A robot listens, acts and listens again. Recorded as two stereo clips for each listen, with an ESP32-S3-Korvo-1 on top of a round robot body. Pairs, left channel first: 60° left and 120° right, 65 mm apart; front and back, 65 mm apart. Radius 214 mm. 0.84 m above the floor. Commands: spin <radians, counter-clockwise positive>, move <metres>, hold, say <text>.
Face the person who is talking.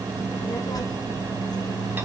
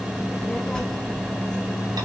spin 1.40
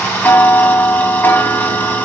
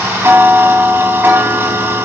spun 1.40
hold
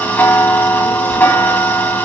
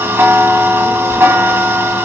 hold
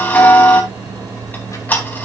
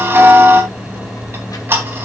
spin 0.44
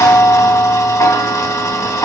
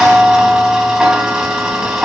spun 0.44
hold
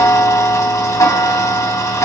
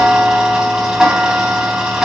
hold
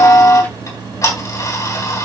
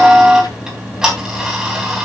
say Facing where the child speaking came from. I can't hear it now.